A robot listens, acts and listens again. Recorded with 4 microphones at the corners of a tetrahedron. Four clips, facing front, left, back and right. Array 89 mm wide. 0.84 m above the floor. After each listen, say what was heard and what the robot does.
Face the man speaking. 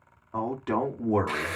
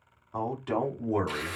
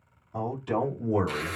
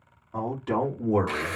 Found it: a man speaking, straight ahead, 1 to 2 m away.